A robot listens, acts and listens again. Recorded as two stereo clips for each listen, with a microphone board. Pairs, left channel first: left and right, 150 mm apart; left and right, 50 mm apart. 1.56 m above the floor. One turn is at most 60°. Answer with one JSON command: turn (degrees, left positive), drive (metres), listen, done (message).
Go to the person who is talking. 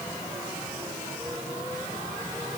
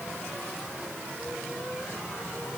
{"listen": true}
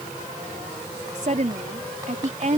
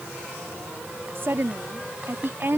{"turn": -55}
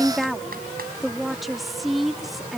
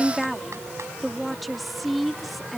{"drive": 1.0}
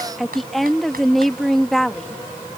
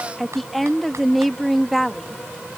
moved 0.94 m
{"drive": 1.0}
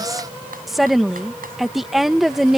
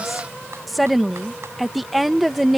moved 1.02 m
{"drive": 1.0}
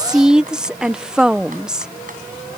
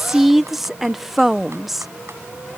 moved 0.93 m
{"drive": 1.0}
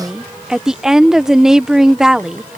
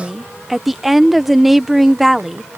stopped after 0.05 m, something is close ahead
{"done": "I am next to the woman speaking."}